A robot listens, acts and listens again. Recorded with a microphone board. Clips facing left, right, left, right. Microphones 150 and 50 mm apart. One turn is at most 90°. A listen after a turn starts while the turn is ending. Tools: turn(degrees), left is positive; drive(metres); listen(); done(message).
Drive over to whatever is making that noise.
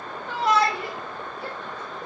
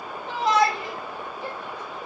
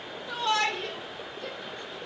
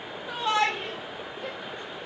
turn(degrees=-15)
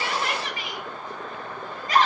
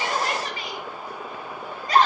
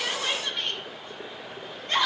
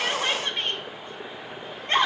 turn(degrees=-90)
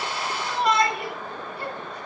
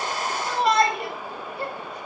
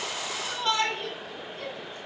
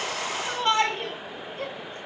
turn(degrees=-55)
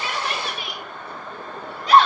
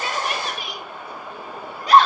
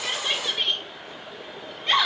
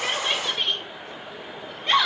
drive(metres=1.0)
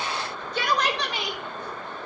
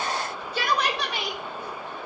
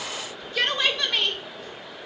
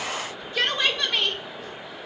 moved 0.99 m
turn(degrees=-10)
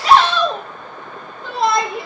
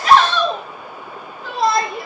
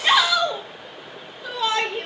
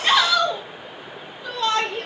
drive(metres=1.0)
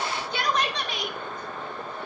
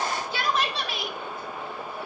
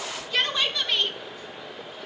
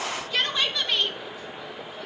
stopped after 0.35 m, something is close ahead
done("I am next to the shout.")